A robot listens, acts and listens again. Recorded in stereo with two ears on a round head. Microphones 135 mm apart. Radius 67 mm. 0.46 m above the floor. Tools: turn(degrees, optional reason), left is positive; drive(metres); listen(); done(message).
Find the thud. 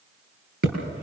turn(degrees=-90)
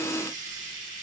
done("I heard a thud from this way, but can't make it out now.")